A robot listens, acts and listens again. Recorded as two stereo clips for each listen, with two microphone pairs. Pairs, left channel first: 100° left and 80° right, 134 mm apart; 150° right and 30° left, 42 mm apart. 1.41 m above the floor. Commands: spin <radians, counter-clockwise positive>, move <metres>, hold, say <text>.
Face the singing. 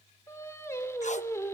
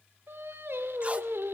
spin 0.52
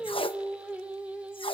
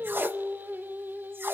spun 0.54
say Found it: singing, straight ahead, 2 to 4 m away.